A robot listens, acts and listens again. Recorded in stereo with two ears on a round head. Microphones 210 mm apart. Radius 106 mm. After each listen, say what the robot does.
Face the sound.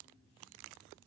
Keep listening.
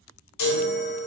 Turn 90° left.
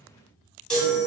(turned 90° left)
Facing the chime.